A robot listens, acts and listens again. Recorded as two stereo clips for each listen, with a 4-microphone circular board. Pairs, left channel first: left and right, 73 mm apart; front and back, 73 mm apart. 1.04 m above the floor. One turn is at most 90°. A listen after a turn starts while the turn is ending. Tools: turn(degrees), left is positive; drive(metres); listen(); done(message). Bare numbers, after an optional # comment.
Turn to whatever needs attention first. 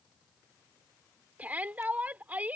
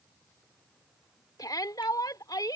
# The shout: 25° right.
turn(-25)
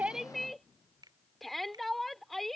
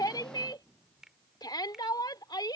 done("Facing the shout.")